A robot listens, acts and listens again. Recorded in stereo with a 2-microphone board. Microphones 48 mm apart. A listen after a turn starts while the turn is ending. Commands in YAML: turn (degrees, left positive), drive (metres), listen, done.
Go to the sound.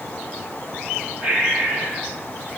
turn: -30
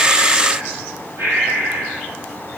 turn: -120
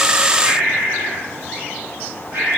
turn: -50
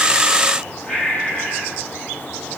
turn: 15
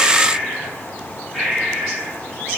drive: 1.0
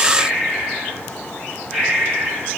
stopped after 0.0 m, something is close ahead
done: "Something is in my way. I am facing the breathing but have not reached it."